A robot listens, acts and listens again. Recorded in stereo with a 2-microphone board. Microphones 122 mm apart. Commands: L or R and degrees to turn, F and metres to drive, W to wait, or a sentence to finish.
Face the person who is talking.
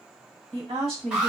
R55
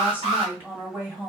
R20
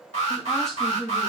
Found it: a woman speaking, straight ahead.